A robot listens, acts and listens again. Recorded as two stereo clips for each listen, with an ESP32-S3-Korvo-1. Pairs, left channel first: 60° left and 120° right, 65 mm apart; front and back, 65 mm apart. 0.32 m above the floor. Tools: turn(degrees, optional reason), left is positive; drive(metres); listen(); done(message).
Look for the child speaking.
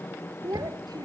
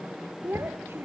turn(degrees=-130, reason="The child speaking: 130° right.")
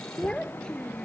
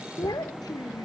turn(degrees=-20, reason="The child speaking is now 20° right.")
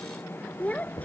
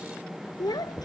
turn(degrees=-10, reason="The child speaking is now 10° right.")
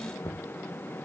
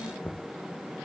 listen()
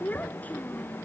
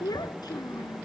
done("Found it: a child speaking, straight ahead.")